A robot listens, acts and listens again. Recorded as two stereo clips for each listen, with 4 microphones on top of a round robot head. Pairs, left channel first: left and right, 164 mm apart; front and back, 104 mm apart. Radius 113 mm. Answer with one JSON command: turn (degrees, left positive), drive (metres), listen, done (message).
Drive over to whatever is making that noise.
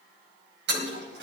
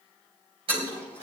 {"turn": -125}
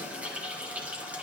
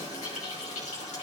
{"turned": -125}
{"turn": -10}
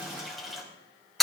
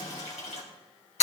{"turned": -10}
{"drive": 1.0}
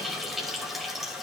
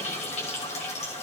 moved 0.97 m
{"drive": 1.0}
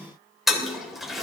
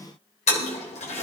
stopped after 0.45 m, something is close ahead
{"done": "Something is in my way. I am facing the toilet flushing but have not reached it."}